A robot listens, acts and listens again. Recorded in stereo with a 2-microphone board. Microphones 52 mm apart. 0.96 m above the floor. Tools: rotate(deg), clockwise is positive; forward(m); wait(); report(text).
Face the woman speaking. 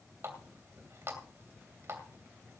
wait()
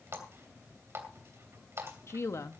rotate(-70)
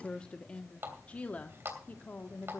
rotate(-35)
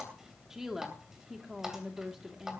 report("Facing the woman speaking.")